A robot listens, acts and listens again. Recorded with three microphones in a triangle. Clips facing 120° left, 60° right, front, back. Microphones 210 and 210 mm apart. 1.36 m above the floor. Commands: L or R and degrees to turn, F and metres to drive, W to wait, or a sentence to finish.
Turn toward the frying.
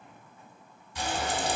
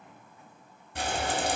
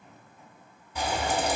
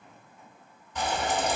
R80
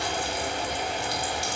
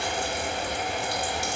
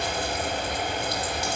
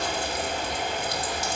R25
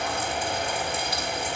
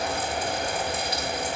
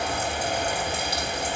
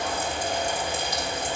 R10
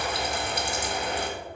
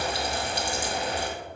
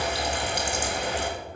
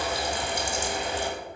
Found it: frying, straight ahead.